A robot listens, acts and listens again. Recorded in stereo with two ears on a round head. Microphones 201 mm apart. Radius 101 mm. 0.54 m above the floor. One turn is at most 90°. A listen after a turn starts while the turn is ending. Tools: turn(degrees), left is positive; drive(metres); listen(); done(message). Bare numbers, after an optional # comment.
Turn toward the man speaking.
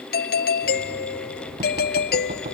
listen()
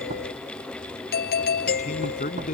# The man speaking: about 35° left or 145° left.
turn(35)
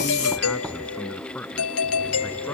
done("Facing the man speaking.")